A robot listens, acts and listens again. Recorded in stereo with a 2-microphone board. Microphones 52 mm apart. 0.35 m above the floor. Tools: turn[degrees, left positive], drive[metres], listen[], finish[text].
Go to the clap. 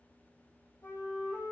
Action: listen[]
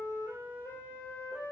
Action: listen[]
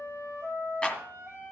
Thought: The clap: about 20° left or 160° left.
Action: turn[20]
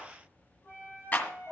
Thought: So it is at 140° left.
Action: turn[140]
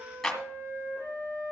Action: drive[1.0]
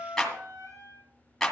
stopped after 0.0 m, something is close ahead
Action: finish[Blocked. The clap is further on, straight ahead.]